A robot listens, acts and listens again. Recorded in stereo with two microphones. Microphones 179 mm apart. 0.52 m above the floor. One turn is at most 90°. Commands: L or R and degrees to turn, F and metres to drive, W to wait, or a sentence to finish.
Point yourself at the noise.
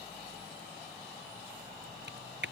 R90
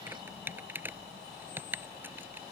R10
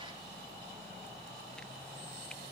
W
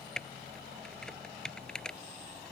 Facing the typing on a keyboard.